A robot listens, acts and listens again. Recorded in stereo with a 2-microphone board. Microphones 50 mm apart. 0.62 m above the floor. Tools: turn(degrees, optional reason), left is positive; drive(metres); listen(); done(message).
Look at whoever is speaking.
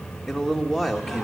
turn(degrees=30)
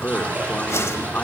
turn(degrees=150, reason="So it is at 150° left.")
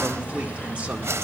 listen()
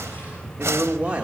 turn(degrees=-30, reason="The man speaking is now 30° right.")
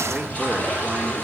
listen()
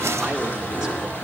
listen()
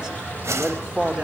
turn(degrees=-15, reason="The man speaking is now 15° right.")
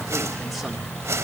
listen()
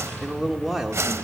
done("Facing the man speaking, 1 to 2 m away.")